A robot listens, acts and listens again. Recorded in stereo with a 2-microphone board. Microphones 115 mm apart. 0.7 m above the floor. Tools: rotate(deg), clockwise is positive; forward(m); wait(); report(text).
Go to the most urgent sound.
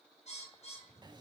wait()
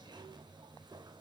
wait()
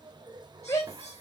rotate(-35)
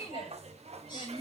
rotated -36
rotate(-110)
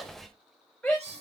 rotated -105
forward(1.0)
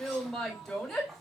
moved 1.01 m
forward(1.0)
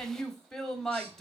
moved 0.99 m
forward(1.0)
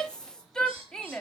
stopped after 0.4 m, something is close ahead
report("I am next to the shout.")